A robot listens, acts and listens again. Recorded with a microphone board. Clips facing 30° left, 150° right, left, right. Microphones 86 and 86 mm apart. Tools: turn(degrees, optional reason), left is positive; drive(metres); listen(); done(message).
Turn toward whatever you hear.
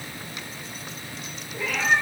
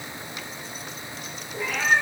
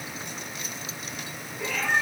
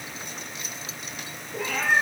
turn(degrees=-85, reason="The cat meowing: 85° right.")
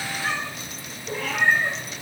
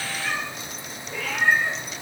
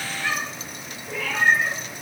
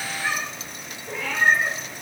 turn(degrees=-25, reason="The cat meowing is now 25° right.")
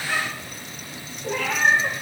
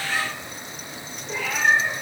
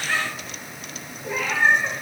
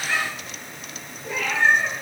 done("Facing the cat meowing, over 4 m away.")